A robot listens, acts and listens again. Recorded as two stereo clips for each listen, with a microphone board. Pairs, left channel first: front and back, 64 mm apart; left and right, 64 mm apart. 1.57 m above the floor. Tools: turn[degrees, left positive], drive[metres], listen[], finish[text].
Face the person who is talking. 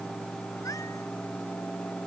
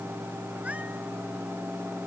Action: listen[]
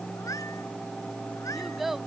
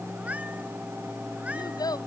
Thought: The child speaking: 90° left.
Action: turn[90]
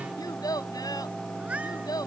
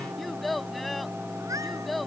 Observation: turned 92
Action: finish[Found it: a child speaking, straight ahead.]